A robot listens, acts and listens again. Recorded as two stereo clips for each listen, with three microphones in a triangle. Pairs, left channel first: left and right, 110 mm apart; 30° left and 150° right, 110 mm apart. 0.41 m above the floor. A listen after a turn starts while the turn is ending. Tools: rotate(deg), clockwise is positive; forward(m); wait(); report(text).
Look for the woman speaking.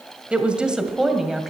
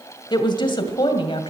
report("Found it: a woman speaking, straight ahead.")